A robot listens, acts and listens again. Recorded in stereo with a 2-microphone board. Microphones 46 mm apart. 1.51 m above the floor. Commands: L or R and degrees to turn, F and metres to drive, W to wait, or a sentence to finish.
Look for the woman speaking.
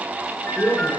L35
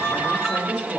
L115
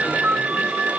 W
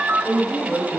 L45
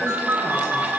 W
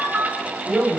L15
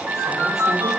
W
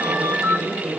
Facing the woman speaking, over 4 m away.